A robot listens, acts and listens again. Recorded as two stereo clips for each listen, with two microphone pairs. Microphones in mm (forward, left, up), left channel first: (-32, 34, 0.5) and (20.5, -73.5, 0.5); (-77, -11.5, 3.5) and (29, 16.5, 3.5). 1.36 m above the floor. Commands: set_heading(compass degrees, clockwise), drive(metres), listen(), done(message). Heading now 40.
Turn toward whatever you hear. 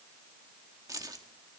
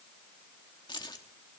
set_heading(160)
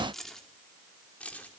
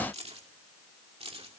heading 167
set_heading(127)
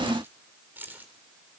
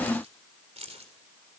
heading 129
set_heading(119)
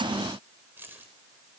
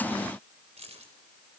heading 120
set_heading(110)
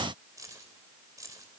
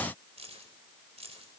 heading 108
done("Found it: keys jangling, straight ahead.")